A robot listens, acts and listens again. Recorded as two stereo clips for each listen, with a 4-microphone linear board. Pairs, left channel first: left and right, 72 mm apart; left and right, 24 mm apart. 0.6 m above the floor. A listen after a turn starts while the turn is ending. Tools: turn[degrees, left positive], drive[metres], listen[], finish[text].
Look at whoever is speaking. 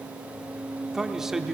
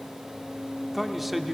Action: turn[-30]
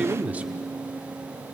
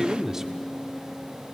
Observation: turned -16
Thought: So it is at 160° right.
Action: turn[-160]
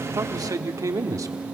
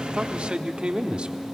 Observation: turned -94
Thought: The man speaking is now 60° right.
Action: turn[-60]
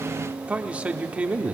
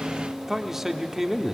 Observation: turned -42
Thought: The man speaking is now 20° right.
Action: turn[-20]
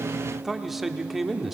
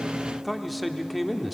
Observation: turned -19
Action: finish[Facing the man speaking, 1 to 2 m away.]